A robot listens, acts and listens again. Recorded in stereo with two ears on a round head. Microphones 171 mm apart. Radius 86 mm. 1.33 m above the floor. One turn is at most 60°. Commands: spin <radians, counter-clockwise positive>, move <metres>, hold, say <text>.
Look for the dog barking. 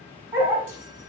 spin -0.52
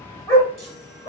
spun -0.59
spin 0.44
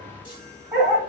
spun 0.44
say Found it: a dog barking, straight ahead.